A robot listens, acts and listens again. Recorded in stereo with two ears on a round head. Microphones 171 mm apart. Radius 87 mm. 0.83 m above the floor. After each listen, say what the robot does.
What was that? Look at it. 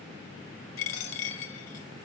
Turn 90° left.
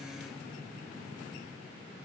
Facing where the dropped coin came from. I can't hear it now.